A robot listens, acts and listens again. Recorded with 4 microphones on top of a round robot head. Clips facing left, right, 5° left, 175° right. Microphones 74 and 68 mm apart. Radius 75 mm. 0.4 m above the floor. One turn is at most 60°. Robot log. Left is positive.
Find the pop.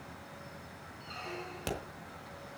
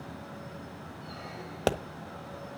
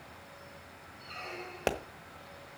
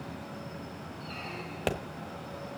note: The pop: 75° right.
cmd yaw -60
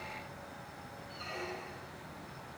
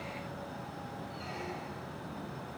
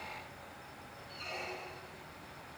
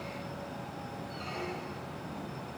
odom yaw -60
note: Nothing new. It was at 15° right.
cmd yaw -15
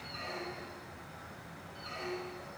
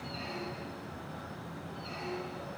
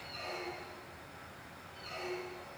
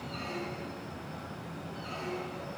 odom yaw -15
end: I heard a pop from this way, but can't make it out now.